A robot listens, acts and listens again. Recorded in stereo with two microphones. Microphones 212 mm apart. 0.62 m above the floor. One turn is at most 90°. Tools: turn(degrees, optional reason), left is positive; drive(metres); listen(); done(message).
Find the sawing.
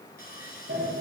turn(degrees=45, reason="The sawing: about 45° left or 135° left.")
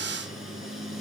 listen()
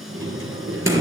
listen()
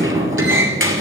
done("I heard sawing, but can't make it out now. It was about straight ahead or 90° left.")